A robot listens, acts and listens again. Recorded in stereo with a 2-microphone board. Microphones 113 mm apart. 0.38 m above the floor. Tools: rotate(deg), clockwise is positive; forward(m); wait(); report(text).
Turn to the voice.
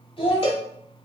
rotate(-55)
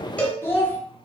rotate(-15)
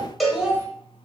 rotate(10)
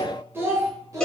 rotate(30)
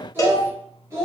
rotate(30)
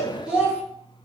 report("Found it: a child speaking, straight ahead.")